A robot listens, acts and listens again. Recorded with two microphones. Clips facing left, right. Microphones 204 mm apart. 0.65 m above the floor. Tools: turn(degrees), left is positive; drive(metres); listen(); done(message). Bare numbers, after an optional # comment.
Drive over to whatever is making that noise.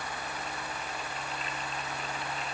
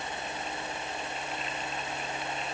listen()
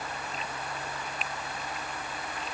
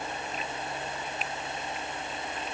listen()
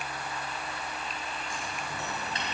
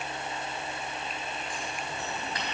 # The scissors: about 25° left or 155° left.
turn(25)
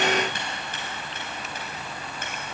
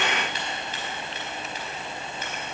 # So it is at 130° left.
turn(130)
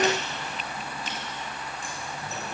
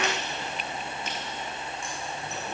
listen()
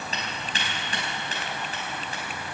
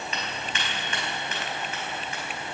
# The scissors is now 35° left.
turn(35)
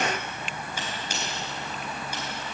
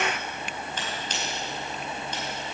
# The scissors is now 10° left.
turn(10)
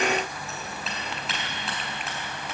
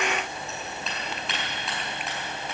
drive(1.0)
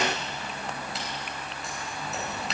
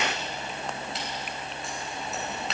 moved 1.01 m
drive(1.0)
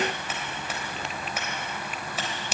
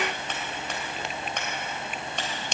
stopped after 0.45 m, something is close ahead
done("Blocked. The scissors is further on, straight ahead.")